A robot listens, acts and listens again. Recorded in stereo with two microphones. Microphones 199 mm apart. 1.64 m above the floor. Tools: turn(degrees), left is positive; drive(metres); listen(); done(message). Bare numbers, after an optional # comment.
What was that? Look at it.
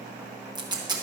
# The tape being pulled: about 25° right or 155° right.
turn(-25)
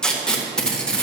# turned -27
done("Found it: tape being pulled, straight ahead.")